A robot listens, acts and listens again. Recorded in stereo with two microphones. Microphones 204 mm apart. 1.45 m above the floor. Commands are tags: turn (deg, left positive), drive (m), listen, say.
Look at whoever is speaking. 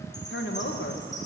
<turn deg="70"/>
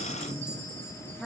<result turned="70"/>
<say>Facing the woman speaking.</say>